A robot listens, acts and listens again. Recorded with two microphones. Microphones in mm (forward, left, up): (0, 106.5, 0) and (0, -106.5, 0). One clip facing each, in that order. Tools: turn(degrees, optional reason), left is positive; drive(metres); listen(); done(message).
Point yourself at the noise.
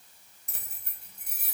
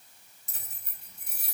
turn(degrees=50, reason="The keys jangling: about 50° left or 130° left.")
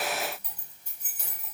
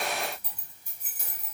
turn(degrees=-15, reason="So it is at 15° right.")
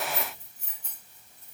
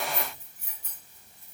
turn(degrees=-10, reason="The keys jangling is now 10° right.")
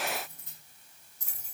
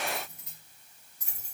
turn(degrees=-15, reason="The keys jangling is now 15° right.")
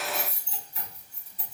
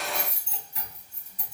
done("Facing the keys jangling, over 4 m away.")